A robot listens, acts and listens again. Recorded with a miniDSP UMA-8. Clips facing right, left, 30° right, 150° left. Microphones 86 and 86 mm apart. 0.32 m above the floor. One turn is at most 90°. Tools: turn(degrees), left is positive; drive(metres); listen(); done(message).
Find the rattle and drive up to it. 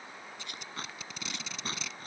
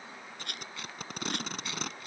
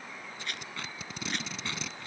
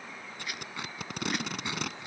turn(degrees=65)
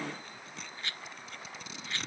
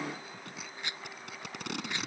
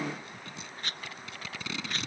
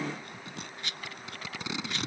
turn(degrees=20)
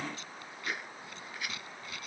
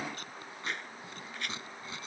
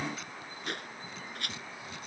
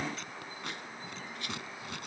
drive(metres=1.0)
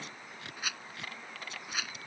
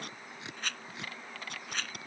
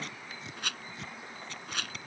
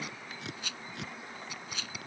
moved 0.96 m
drive(metres=1.0)
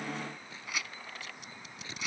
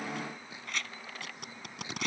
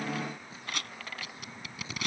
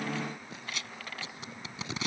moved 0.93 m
drive(metres=1.0)
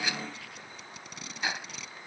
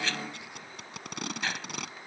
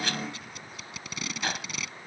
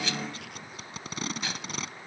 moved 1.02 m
turn(degrees=-15)
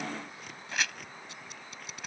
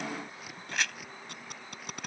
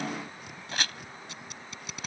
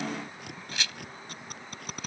drive(metres=1.0)
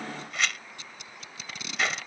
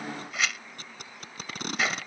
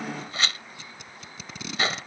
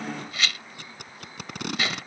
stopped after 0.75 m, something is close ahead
done("Arrived at the rattle, straight ahead.")